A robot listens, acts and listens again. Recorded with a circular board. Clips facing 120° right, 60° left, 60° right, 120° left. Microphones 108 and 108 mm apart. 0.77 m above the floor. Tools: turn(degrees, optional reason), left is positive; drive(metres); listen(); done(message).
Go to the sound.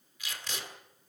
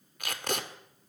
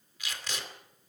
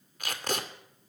turn(degrees=85, reason="The tape being pulled: 85° left.")
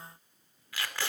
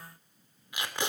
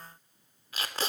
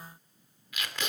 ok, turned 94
turn(degrees=-10, reason="The tape being pulled is now 10° right.")
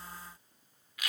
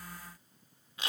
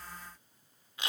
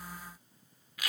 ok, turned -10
drive(metres=1.0)
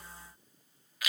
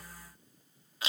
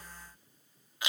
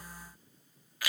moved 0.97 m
drive(metres=1.0)
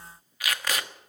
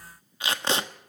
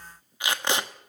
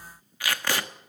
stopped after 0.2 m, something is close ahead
done("Arrived at the tape being pulled, straight ahead.")